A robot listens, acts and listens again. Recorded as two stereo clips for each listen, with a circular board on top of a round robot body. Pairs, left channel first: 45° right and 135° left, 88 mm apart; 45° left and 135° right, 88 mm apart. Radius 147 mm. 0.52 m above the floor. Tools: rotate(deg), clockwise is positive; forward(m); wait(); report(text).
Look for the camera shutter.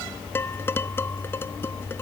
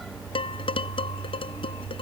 wait()
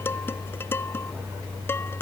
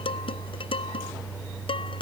wait()
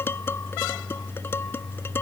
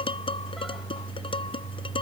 report("I can't make out a camera shutter to turn to.")